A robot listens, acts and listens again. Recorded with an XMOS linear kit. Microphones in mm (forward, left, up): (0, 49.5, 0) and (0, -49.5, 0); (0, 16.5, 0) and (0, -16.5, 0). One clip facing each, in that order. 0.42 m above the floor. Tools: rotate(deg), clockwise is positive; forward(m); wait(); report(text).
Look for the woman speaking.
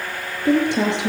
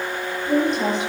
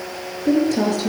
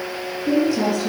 rotate(-75)
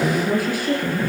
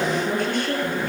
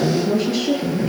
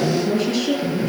report("Found it: a woman speaking, straight ahead.")